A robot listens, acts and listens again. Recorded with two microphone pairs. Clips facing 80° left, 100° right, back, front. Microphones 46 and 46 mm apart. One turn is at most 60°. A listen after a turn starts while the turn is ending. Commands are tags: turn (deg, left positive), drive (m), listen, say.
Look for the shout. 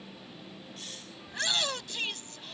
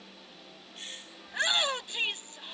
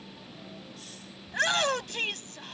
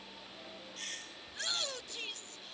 <turn deg="-60"/>
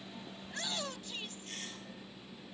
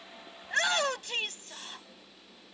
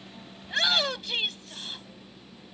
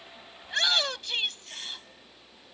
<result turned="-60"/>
<turn deg="-60"/>
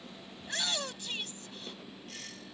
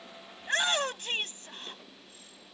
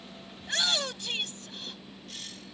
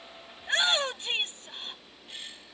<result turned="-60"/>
<turn deg="-55"/>
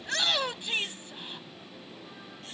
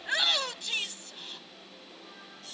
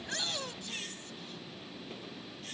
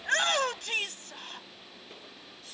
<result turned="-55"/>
<turn deg="10"/>
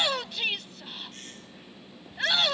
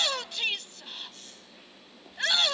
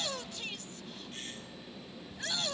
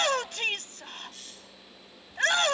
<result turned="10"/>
<say>Facing the shout.</say>